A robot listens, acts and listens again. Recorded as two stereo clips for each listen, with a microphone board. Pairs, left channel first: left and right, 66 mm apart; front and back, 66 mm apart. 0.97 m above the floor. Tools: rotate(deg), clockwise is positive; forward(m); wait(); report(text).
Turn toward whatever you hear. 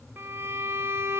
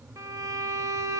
rotate(140)
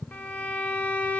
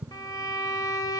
rotate(-20)
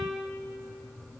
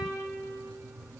report("Facing the violin, under 1 m away.")